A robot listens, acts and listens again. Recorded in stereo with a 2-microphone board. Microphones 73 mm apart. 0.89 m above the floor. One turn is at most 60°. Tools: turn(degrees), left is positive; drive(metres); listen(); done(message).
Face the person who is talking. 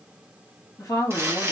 turn(degrees=55)
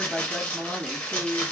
turn(degrees=10)
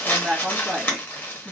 done("Facing the woman speaking.")